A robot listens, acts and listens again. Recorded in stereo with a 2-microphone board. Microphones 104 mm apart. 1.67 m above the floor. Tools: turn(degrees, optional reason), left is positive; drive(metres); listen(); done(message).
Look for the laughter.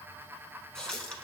listen()
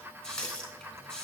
listen()
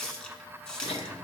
turn(degrees=70, reason="The laughter: about 70° left or 110° left.")
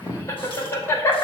turn(degrees=30, reason="So it is at 30° left.")
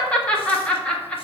turn(degrees=10, reason="The laughter is now 10° left.")
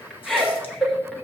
done("Found it: laughter, straight ahead, 1 to 2 m away.")